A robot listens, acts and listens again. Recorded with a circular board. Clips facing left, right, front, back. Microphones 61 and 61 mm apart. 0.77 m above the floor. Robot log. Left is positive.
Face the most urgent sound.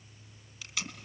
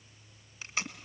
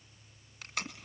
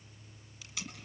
cmd idle
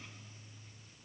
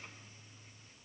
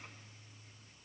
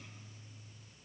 cmd idle
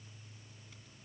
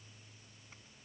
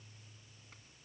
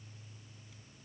end: I can't make out anything urgent, only tape being pulled.